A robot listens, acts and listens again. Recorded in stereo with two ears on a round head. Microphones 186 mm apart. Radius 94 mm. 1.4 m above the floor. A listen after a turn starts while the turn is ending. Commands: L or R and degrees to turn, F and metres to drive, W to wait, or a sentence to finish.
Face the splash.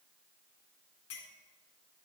W
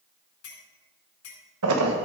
R90
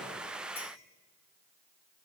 Facing where the splash came from. I can't hear it now.